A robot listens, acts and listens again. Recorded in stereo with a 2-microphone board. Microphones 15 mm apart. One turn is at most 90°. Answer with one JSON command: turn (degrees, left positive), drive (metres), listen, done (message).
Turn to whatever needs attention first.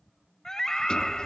{"turn": 35}
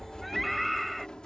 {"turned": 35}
{"done": "Facing the scream."}